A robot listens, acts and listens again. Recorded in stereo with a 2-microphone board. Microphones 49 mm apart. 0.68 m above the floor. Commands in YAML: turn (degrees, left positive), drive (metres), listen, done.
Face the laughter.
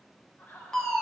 turn: 40
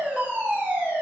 listen: true
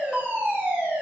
listen: true
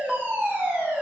done: "I heard laughter, but can't make it out now. It was about straight ahead or 100° left."